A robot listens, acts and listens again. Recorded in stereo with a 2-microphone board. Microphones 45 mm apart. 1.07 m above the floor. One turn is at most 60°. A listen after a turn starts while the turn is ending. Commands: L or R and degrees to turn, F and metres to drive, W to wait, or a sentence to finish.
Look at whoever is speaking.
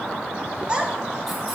R20
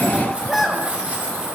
Found it: a child speaking, straight ahead.